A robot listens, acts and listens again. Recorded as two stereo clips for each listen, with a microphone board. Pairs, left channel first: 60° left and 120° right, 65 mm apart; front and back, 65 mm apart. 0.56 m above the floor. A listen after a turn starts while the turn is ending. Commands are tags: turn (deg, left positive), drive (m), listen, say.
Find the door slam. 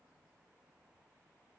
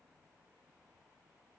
<listen/>
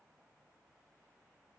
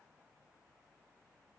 <listen/>
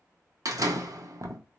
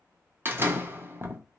<turn deg="-130"/>
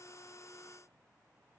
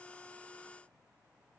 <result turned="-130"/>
<say>I heard a door slam from this way, but can't make it out now.</say>